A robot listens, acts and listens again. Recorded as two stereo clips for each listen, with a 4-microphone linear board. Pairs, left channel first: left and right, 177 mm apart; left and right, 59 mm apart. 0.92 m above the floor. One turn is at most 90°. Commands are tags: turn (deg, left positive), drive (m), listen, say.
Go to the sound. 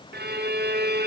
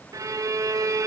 <turn deg="-60"/>
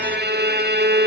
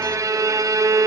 <turn deg="-60"/>
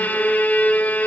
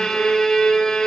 <turn deg="10"/>
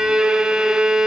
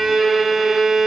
<drive m="1.0"/>
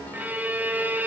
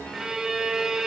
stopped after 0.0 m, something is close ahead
<turn deg="-10"/>
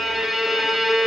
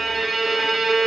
<say>Blocked. The violin is further on, straight ahead.</say>